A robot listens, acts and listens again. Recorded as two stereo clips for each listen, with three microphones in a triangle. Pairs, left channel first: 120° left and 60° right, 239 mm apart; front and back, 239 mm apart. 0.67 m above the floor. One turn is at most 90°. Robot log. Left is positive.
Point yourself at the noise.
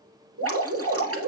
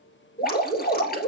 note: The dripping: 50° right.
cmd yaw -50
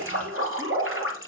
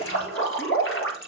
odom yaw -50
note: The dripping is now 30° right.
cmd yaw -30
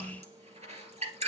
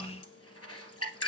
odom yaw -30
end: Facing the dripping, 1 to 2 m away.